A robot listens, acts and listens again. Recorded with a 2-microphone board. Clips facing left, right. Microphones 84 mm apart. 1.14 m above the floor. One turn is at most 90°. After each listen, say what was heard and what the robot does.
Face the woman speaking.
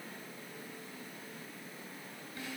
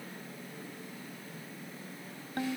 Keep listening.
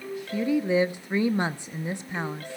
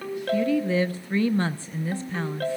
The woman speaking: about 15° left or 165° left. Turn 15° left.
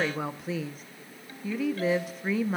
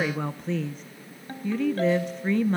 Found it: a woman speaking, straight ahead.